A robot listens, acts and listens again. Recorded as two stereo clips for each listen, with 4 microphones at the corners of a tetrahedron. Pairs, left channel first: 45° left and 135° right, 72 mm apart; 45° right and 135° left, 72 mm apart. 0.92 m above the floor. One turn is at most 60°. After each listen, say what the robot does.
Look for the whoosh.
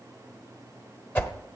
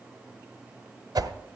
Turn 60° left.
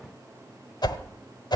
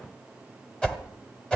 Turn 30° left.
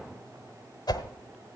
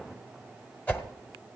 Turn 20° left.
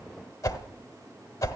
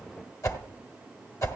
Found it: a whoosh, straight ahead, 1 to 2 m away.